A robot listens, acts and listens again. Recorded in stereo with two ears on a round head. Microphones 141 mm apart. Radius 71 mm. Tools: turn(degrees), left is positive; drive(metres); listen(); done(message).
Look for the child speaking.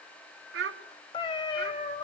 turn(degrees=-75)
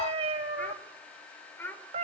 turn(degrees=15)
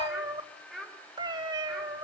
done("Facing the child speaking, over 4 m away.")